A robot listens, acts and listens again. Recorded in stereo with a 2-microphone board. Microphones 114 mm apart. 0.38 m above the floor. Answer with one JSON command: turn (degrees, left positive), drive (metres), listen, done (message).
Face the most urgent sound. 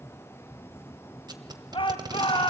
{"turn": 50}
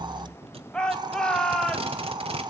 {"turn": 10}
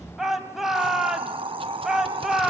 {"done": "Facing the shout, 2 to 4 m away."}